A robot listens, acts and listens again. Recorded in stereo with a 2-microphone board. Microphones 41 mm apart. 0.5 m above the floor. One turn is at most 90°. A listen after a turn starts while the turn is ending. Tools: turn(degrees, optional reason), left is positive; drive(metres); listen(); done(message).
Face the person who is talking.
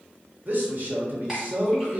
turn(degrees=-50, reason="The man speaking: about 50° right or 130° right.")
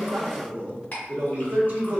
turn(degrees=-70, reason="So it is at 70° right.")
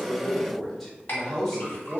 done("Found it: a man speaking, straight ahead.")